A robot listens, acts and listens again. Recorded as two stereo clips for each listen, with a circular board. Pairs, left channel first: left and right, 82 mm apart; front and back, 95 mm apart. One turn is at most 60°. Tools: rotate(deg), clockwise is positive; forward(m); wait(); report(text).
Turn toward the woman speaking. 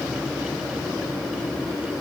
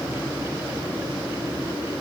wait()
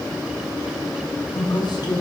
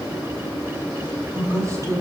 rotate(-60)
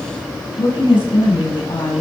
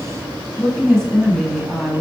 rotate(-60)
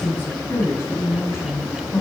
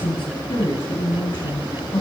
rotate(-30)
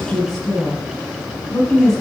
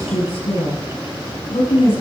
report("Found it: a woman speaking, straight ahead.")